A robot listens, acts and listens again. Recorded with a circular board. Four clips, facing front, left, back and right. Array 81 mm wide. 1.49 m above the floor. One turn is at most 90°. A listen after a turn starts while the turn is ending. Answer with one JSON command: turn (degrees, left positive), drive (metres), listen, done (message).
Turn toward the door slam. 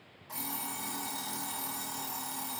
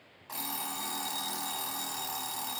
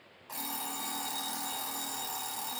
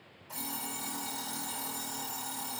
{"listen": true}
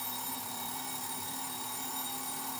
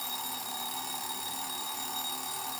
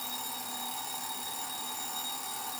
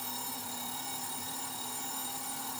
{"listen": true}
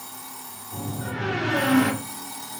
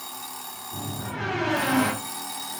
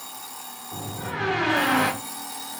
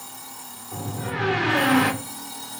{"turn": -90}
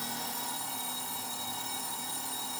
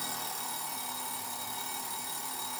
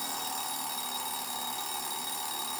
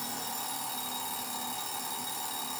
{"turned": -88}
{"turn": -45}
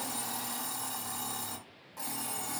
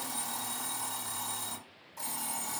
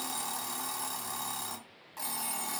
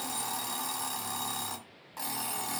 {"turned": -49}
{"done": "Facing where the door slam came from. I can't hear it now."}